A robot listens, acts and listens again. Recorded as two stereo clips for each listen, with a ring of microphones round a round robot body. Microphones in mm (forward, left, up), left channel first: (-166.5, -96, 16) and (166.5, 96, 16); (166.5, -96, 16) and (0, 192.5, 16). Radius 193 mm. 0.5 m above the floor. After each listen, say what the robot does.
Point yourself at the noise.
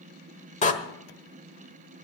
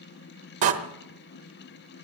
Turn 140° left.
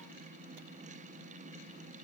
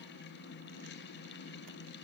I heard a door slam from this way, but can't make it out now.